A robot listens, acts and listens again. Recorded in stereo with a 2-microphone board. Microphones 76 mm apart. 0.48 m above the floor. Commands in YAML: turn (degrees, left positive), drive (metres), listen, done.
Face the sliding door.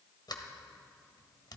turn: 70
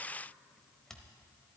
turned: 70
done: "Facing the sliding door."